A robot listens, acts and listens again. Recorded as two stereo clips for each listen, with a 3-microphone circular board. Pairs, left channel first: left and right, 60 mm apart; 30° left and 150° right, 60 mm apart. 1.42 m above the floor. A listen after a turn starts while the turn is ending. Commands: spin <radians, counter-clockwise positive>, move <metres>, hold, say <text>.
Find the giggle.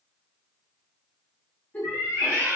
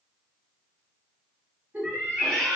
spin 2.71
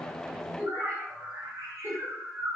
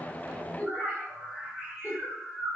spin -0.61
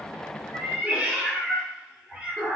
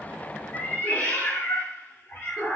hold
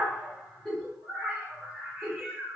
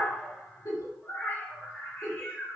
spin 0.17
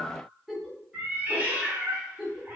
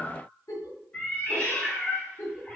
say Facing the giggle, under 1 m away.